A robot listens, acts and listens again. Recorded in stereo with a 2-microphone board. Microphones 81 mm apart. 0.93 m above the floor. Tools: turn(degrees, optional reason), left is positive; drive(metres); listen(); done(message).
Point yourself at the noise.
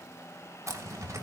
turn(degrees=-45, reason="The zipper: about 45° right or 135° right.")
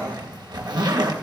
turn(degrees=-90, reason="So it is at 90° right.")
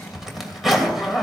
done("Found it: a zipper, straight ahead, 2 to 4 m away.")